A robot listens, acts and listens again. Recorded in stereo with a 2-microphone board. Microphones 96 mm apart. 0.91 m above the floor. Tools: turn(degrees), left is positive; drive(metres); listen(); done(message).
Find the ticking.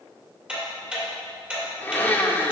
turn(degrees=-30)
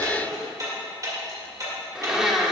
turn(degrees=-140)
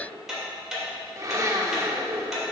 done("Found it: ticking, straight ahead, 2 to 4 m away.")